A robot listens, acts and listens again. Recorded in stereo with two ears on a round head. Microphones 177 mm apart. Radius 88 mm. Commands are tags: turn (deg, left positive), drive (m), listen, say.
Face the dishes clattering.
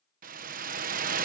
<listen/>
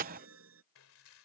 <turn deg="90"/>
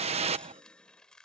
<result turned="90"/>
<say>Found it: dishes clattering, straight ahead.</say>